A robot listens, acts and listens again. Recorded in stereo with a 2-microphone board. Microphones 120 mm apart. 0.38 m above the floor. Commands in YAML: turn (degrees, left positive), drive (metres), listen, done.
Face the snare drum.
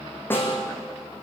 turn: 20
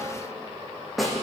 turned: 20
done: "Facing the snare drum, over 4 m away."